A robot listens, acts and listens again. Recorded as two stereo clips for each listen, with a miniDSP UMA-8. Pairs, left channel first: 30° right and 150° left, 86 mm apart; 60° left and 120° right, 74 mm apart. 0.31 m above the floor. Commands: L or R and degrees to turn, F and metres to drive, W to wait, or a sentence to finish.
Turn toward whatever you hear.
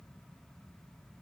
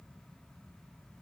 W
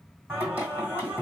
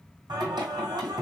R140
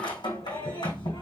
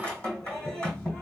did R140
R15
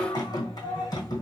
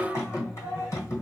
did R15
Facing the singing.